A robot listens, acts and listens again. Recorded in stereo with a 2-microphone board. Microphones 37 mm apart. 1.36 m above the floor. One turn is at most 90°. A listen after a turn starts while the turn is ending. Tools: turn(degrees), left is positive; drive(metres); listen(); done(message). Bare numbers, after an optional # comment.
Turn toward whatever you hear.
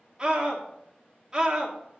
# The scream: about 15° right or 165° right.
turn(-15)
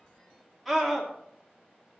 done("Facing the scream, 2 to 4 m away.")